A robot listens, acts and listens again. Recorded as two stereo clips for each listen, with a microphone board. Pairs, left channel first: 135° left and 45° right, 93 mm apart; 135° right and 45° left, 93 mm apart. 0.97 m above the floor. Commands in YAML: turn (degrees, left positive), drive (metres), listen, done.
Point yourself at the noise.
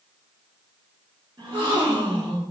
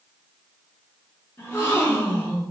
turn: -70
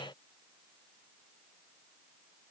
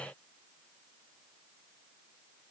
done: "Facing where the gasp came from. I can't hear it now."